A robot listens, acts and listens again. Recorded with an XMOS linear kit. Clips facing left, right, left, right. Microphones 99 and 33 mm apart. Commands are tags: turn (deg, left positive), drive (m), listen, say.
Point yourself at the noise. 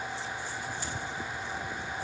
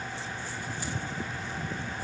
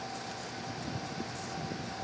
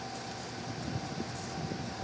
<listen/>
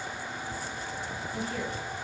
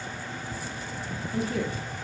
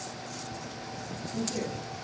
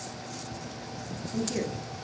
<turn deg="-90"/>
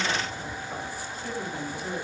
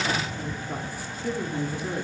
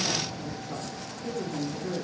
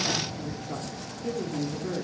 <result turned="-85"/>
<turn deg="-20"/>
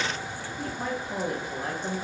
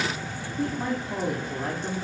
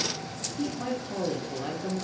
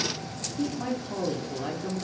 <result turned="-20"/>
<say>Facing the woman speaking, under 1 m away.</say>